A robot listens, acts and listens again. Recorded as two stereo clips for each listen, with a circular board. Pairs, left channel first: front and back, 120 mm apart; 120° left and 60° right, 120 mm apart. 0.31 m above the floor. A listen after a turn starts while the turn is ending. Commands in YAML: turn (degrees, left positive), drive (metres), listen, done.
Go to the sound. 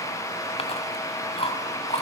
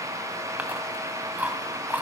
turn: 15
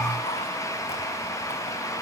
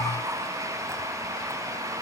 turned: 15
listen: true
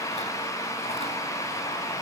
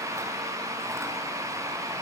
listen: true
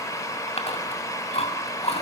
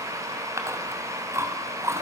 drive: 1.0
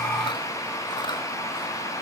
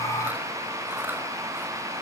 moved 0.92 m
listen: true
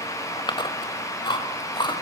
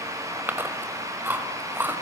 drive: 1.0
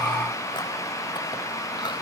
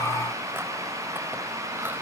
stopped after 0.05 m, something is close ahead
listen: true
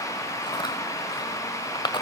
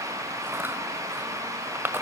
done: "I am next to the chewing."